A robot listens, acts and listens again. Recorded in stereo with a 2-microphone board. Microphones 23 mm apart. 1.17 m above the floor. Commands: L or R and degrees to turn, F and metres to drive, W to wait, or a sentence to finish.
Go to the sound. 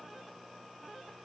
W
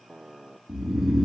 R15
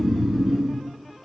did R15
R150
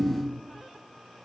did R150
R15
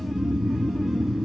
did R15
F1.0
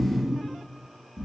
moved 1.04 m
R15
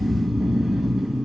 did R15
F1.0
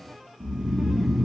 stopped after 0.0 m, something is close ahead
Arrived at the snoring, straight ahead.